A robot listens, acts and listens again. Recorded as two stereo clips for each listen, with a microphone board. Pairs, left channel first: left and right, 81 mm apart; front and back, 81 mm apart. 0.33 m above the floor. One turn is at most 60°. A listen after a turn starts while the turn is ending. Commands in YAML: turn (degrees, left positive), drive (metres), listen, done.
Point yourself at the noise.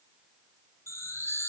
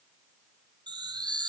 turn: 60
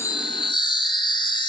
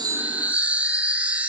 turn: 60
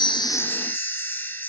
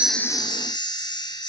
turn: 25
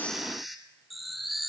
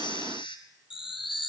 done: "Facing the chime."